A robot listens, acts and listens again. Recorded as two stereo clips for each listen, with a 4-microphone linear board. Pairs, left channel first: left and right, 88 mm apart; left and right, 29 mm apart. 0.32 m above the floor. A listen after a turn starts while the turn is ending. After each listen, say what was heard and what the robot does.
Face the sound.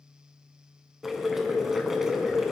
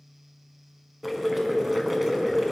Turn 30° right.
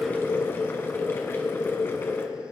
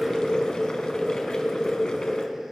So it is at 30° left. Turn 30° left.
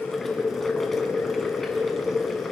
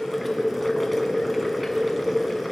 Found it: boiling, straight ahead.